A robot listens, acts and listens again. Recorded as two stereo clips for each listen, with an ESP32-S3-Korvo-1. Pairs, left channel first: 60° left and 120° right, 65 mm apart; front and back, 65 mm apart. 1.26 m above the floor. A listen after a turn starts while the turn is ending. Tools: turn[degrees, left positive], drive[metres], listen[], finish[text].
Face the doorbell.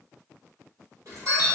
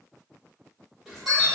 Thought: The doorbell: 100° right.
Action: turn[-100]
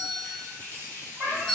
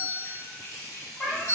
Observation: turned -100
Thought: The doorbell is now 35° right.
Action: turn[-35]
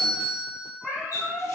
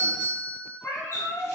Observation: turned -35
Action: finish[Found it: a doorbell, straight ahead.]